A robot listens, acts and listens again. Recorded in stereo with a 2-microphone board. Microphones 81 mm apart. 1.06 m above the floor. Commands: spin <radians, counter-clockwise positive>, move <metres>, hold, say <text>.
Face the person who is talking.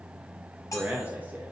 spin -0.35
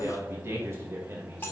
spin -2.44
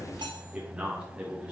spin -0.26
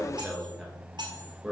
say Facing the man speaking.